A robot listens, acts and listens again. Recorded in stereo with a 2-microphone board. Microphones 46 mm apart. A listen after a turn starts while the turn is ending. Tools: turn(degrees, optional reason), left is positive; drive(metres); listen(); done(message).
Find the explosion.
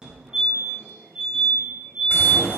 turn(degrees=55, reason="The explosion: about 55° left or 125° left.")
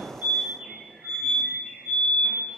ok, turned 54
listen()
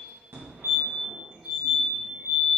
done("I heard an explosion, but can't make it out now. It was about straight ahead or 75° left.")